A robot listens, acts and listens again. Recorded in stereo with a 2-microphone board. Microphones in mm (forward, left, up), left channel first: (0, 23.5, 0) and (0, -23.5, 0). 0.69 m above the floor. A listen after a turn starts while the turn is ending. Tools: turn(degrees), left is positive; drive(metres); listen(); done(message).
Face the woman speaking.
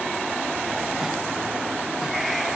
listen()
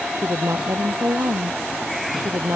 turn(degrees=-90)
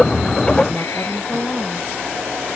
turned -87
turn(degrees=10)
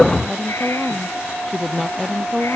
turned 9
done("Found it: a woman speaking, straight ahead.")